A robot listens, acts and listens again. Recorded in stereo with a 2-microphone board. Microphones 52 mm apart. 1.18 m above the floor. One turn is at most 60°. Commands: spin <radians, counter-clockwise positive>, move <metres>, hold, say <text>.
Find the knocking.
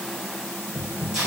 spin 0.87
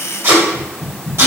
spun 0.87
spin 1.05
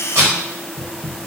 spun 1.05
spin 0.44
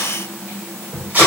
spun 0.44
spin -0.26
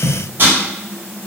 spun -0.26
say Facing the knocking.